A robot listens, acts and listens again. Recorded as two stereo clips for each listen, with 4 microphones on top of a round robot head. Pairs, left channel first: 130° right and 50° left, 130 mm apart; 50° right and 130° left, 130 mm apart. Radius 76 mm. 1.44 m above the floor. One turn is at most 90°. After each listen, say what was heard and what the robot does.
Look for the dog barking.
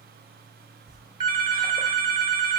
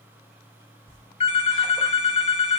Keep listening.
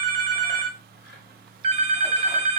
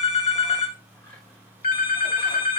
Keep listening.
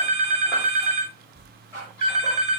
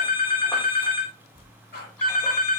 The dog barking: 55° right. Turn 55° right.
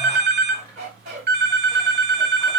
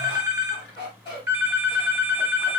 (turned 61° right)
The dog barking is now 10° left. Turn 10° left.
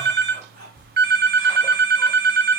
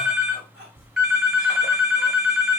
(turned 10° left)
Found it: a dog barking, straight ahead, 2 to 4 m away.